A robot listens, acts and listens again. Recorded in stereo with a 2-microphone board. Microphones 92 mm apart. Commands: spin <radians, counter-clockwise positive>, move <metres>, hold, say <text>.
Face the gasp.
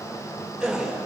spin -0.52
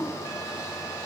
hold
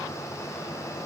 say I heard a gasp, but can't make it out now. It was about 25° left or 145° right.